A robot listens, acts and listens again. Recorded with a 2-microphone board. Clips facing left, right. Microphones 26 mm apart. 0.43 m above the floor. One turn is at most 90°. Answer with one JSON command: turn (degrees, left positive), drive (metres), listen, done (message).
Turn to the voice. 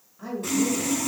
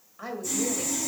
{"turn": -40}
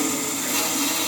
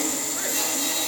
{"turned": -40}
{"listen": true}
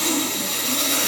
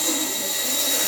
{"listen": true}
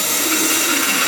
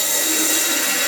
{"done": "I heard a woman speaking, but can't make it out now. It was about straight ahead or 100° right."}